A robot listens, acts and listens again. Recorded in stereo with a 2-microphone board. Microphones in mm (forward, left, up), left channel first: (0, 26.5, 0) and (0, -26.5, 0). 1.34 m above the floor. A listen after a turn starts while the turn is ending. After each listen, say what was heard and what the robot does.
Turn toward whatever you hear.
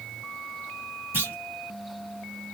The clunk: about 40° right or 140° right. Turn 40° right.
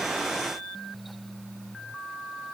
Keep listening.
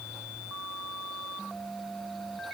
I heard a clunk, but can't make it out now. It was about straight ahead or 100° right.